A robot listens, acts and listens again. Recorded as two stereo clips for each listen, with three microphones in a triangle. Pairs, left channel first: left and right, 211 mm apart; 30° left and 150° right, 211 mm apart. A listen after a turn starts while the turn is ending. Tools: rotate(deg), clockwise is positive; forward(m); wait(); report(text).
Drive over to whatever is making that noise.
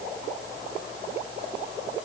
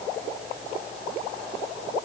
wait()
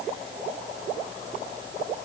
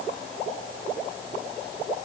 wait()
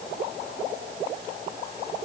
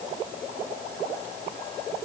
report("I can't make out anything to turn to.")